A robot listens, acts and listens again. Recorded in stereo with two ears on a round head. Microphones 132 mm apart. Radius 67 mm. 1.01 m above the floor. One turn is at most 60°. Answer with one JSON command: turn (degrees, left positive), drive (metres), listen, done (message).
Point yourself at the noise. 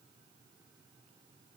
{"listen": true}
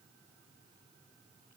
{"listen": true}
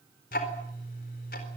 {"turn": 60}
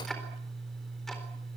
{"done": "Found it: ticking, straight ahead, 2 to 4 m away."}